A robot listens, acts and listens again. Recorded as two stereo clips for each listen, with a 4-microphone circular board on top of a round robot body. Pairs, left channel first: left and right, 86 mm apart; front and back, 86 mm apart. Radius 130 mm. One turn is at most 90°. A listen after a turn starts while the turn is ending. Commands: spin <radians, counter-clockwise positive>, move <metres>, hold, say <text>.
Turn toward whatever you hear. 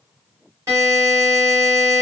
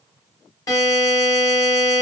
spin -0.79
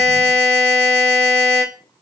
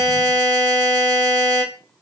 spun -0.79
spin -0.35
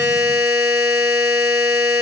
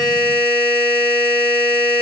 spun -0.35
say Facing the buzzer, 2 to 4 m away.